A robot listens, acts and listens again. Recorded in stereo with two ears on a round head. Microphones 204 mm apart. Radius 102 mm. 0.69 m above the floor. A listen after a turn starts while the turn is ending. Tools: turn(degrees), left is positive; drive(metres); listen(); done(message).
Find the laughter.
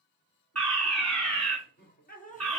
turn(degrees=35)
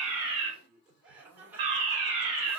turn(degrees=-10)
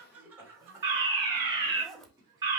turn(degrees=-20)
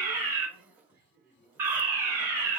listen()
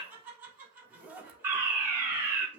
turn(degrees=-10)
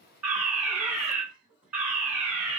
done("Facing the laughter.")